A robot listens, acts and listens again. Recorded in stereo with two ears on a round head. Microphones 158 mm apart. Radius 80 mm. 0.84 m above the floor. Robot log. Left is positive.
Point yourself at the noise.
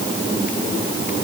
cmd idle
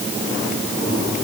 cmd idle
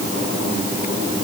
end: I can't make out anything to turn to.